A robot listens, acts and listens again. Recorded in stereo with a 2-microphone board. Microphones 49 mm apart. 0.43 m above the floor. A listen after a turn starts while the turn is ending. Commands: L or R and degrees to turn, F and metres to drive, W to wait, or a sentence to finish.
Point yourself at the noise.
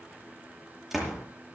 R30
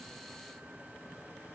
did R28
W
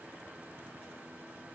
I heard a door slam, but can't make it out now. It was about 25° left or 145° right.